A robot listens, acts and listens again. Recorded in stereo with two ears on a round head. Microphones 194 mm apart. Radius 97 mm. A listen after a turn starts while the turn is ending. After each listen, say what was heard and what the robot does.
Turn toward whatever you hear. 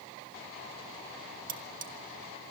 The cutlery clinking: about 40° right or 140° right. Turn 40° right.
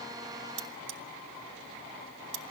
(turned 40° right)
So it is at 95° right. Turn 95° right.
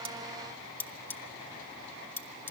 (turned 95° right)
The cutlery clinking is now 10° left. Turn 10° left.
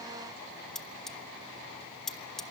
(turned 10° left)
Facing the cutlery clinking.